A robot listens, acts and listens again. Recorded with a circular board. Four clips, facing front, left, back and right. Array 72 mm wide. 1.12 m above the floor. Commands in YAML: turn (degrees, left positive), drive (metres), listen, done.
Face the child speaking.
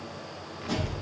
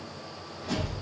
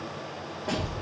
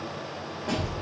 turn: -30
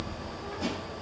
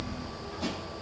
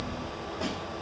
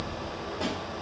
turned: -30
turn: -10
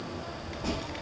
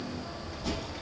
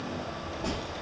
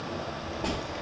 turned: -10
turn: -10
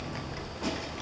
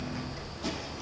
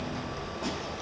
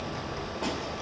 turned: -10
turn: -15
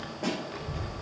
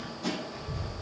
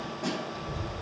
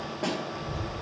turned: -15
turn: -10
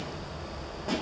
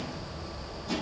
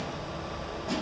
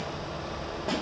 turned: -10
done: "Facing the child speaking."